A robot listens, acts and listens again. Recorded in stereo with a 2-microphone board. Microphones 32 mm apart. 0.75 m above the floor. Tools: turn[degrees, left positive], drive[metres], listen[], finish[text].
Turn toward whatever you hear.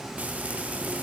Thought: The frying: about 50° right or 130° right.
Action: turn[-50]
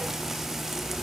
Thought: So it is at 10° right.
Action: turn[-10]
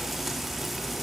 Action: finish[Facing the frying.]